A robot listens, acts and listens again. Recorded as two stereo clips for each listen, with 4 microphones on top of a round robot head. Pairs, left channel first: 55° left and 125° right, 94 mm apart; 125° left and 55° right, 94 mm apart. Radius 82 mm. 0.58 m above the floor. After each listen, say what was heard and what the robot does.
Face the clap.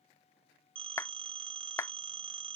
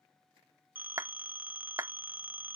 Found it: a clap, straight ahead.